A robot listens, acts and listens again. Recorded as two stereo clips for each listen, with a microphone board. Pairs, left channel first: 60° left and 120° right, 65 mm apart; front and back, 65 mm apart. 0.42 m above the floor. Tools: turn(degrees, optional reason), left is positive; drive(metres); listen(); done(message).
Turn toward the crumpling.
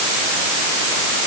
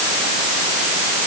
listen()
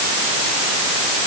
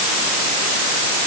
listen()
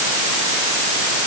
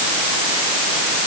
done("I can't make out crumpling.")